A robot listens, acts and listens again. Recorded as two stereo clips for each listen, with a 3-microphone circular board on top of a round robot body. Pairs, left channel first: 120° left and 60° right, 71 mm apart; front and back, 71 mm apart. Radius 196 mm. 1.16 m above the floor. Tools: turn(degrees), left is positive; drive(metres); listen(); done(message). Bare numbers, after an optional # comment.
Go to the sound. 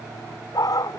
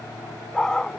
# The dog barking: 80° left.
turn(80)
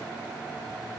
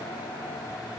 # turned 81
listen()
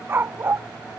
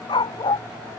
drive(1.0)
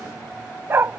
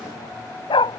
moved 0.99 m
drive(1.0)
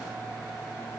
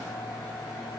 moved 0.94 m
listen()
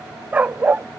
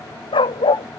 # The dog barking is now 10° left.
turn(10)
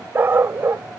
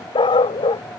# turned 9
drive(1.0)
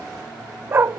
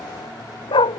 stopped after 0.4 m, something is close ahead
done("Arrived at the dog barking, straight ahead.")